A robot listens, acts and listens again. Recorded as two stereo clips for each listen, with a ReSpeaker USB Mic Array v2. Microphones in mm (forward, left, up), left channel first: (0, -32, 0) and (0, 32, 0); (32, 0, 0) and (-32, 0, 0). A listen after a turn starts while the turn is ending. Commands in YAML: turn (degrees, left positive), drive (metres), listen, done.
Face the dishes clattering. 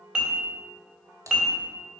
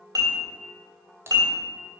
turn: 165
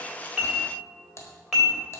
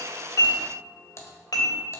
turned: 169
done: "Found it: dishes clattering, straight ahead, 2 to 4 m away."